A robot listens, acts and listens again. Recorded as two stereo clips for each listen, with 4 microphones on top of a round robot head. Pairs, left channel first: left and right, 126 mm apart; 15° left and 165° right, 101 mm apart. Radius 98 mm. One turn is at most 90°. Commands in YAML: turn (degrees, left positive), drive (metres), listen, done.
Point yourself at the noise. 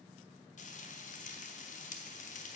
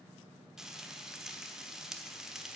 turn: 90
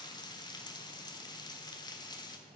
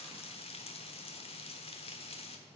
turn: 35
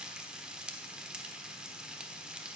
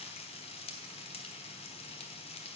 done: "Found it: frying, straight ahead, 1 to 2 m away."